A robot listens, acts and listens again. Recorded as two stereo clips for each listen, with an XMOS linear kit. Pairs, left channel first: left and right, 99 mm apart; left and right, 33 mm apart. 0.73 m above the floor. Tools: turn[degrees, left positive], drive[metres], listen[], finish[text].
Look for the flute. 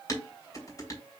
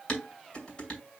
Action: listen[]
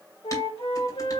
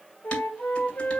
Thought: The flute: about 75° left or 105° left.
Action: turn[75]
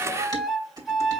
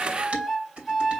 Action: finish[Found it: a flute, straight ahead.]